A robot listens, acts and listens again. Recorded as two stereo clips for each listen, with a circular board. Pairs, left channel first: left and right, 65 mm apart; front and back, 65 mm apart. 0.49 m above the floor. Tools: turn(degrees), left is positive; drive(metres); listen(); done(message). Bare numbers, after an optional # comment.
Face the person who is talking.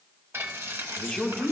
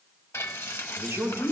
# The man speaking: 175° left.
turn(175)
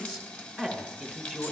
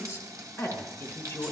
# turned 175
# The man speaking is now 15° left.
turn(15)
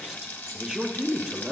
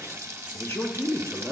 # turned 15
done("Facing the man speaking.")